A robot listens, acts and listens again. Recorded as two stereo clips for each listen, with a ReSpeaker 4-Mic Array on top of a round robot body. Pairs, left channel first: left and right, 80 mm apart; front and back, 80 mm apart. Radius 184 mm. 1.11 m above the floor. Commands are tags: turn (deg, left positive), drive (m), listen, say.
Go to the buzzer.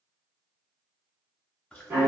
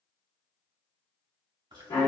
<listen/>
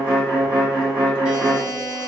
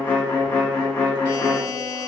<turn deg="-150"/>
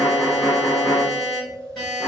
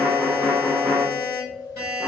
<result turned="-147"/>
<drive m="1.0"/>
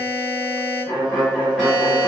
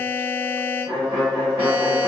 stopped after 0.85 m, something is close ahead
<say>Arrived at the buzzer, straight ahead.</say>